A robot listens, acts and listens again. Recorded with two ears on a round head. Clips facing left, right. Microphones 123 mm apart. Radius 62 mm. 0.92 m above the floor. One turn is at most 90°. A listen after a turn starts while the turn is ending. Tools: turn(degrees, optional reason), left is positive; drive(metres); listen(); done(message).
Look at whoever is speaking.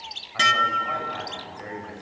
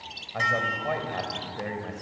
turn(degrees=-45, reason="The man speaking: about 45° right or 135° right.")
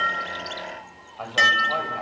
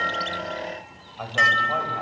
done("Found it: a man speaking, straight ahead, over 4 m away.")